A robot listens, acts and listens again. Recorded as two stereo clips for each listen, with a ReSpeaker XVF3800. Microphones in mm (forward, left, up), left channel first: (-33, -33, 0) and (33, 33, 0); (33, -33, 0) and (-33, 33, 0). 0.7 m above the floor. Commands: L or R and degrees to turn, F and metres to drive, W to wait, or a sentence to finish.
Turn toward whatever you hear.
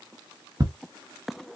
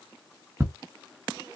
L80
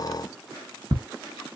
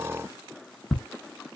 L45
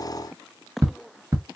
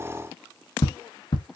R10
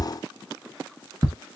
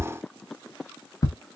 Found it: ticking, straight ahead, 1 to 2 m away.